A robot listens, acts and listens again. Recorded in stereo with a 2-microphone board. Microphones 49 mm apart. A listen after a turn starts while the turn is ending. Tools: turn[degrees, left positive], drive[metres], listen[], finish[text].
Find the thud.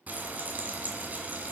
Action: listen[]
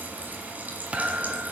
Thought: The thud: about 25° right or 155° right.
Action: turn[-25]
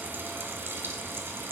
Action: listen[]
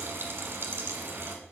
Action: finish[I heard a thud, but can't make it out now. It was about straight ahead or 130° right.]